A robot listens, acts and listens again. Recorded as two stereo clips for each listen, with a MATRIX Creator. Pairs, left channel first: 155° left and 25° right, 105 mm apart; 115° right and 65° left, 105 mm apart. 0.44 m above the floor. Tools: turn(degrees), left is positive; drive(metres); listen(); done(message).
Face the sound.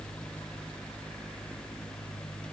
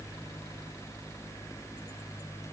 listen()
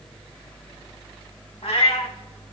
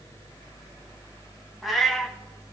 turn(degrees=160)
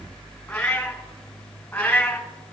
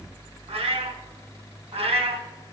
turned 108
turn(degrees=80)
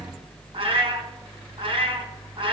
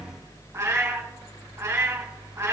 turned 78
done("Found it: a cat meowing, straight ahead.")